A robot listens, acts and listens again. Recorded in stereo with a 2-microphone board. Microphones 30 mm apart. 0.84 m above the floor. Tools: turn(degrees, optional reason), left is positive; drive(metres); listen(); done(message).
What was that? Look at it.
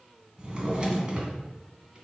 turn(degrees=-30, reason="The drawer: about 30° right or 150° right.")
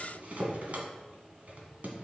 turn(degrees=-120, reason="So it is at 120° right.")
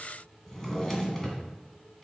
turn(degrees=15, reason="The drawer is now 15° left.")
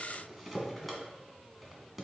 done("Facing the drawer, 1 to 2 m away.")